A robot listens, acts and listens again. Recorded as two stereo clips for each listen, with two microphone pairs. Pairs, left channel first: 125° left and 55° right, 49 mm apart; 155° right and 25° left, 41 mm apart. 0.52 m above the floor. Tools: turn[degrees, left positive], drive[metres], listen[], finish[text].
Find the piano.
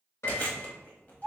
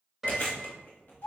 Thought: The piano: 110° left.
Action: turn[110]
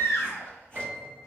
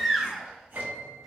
Action: finish[Found it: a piano, straight ahead, 1 to 2 m away.]